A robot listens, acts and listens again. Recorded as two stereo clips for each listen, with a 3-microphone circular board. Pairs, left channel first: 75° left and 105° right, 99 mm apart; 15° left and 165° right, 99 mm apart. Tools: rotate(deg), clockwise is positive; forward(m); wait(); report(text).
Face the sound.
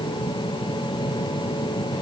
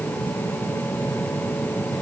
wait()
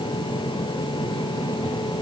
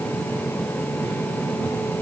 wait()
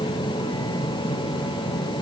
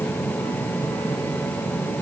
report("I can't make out anything.")